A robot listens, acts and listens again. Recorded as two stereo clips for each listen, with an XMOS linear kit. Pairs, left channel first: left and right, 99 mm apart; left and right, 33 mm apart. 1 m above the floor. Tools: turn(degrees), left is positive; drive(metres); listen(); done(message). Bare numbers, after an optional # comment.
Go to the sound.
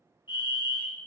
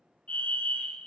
# The fire alarm: about 50° left or 130° left.
turn(50)
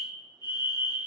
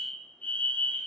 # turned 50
# So it is at 65° left.
turn(65)
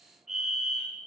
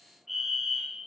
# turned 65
drive(1.0)
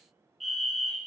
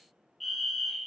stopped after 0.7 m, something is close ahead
done("Arrived at the fire alarm, straight ahead.")